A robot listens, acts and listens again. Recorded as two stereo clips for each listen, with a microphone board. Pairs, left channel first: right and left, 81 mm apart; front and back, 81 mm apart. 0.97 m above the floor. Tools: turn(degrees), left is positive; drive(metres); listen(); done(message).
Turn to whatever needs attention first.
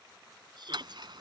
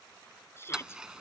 turn(degrees=60)
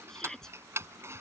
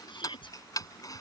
done("Facing the shout.")